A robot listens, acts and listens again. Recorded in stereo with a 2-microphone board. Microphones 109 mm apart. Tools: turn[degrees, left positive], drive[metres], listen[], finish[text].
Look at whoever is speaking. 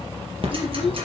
Thought: The child speaking: about 55° left or 125° left.
Action: turn[55]
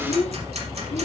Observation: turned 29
Thought: So it is at 95° left.
Action: turn[95]
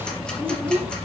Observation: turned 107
Thought: The child speaking is now 15° right.
Action: turn[-15]
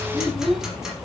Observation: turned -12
Action: finish[Found it: a child speaking, straight ahead.]